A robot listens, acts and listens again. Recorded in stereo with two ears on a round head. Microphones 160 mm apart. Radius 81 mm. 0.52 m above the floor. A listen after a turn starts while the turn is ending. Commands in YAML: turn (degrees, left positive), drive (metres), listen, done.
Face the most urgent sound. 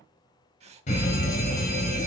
turn: 40
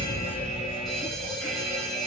done: "Found it: a fire alarm, straight ahead, over 4 m away."